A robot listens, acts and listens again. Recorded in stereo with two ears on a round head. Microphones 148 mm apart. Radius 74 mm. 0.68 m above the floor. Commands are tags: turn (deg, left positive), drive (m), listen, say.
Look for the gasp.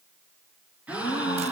<turn deg="-30"/>
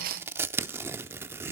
<listen/>
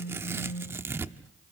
<say>I heard a gasp, but can't make it out now. It was about 20° left or 140° right.</say>